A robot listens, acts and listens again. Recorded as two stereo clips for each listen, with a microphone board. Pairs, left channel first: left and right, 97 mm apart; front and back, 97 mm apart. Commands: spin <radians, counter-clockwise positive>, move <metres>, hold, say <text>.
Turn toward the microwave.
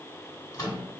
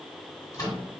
spin 0.87
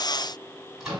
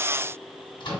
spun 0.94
say Found it: a microwave, straight ahead, 1 to 2 m away.